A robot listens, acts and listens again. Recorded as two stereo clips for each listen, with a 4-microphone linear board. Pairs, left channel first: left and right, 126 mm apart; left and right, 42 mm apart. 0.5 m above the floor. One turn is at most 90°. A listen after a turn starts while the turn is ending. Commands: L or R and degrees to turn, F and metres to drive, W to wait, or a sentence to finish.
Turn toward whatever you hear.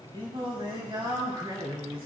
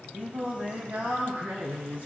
R45
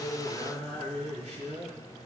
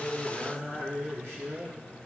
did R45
R80
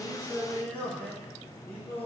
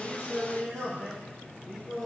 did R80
L15
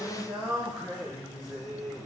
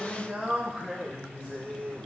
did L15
Found it: singing, straight ahead, over 4 m away.